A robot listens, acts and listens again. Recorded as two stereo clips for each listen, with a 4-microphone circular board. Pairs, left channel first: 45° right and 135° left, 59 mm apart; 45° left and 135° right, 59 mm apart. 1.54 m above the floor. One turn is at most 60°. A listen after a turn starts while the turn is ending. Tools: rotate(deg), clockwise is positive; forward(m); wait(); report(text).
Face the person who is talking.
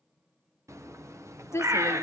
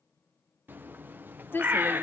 report("Found it: a woman speaking, straight ahead, 1 to 2 m away.")